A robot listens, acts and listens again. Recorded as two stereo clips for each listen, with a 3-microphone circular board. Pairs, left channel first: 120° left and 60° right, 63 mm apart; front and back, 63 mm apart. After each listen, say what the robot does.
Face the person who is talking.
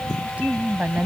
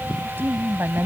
Turn 125° right.
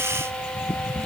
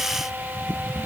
Keep listening.
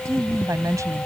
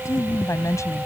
Turn 35° right.
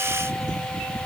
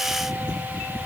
Keep listening.
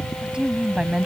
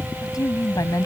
Turn 15° left.
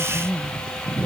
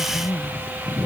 Found it: a woman speaking, straight ahead.